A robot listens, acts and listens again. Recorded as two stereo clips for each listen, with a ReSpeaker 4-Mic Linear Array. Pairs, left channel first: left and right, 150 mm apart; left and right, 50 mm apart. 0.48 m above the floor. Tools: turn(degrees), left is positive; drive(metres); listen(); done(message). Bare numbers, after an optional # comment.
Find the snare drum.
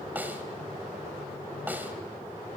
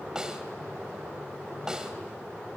turn(-30)
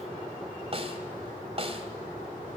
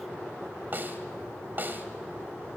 # So it is at 135° right.
turn(-135)
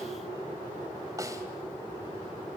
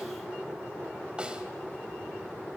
# The snare drum is now 25° right.
turn(-25)
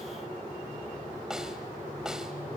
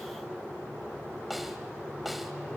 done("Found it: a snare drum, straight ahead, 1 to 2 m away.")